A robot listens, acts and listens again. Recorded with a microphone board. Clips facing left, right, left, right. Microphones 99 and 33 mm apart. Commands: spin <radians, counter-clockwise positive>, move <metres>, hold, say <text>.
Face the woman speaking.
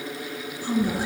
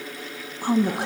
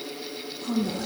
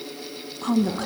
spin -1.05
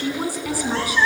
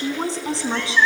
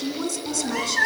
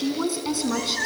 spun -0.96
spin -0.44
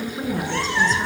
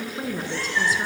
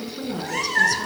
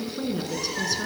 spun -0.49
say Found it: a woman speaking, straight ahead, over 4 m away.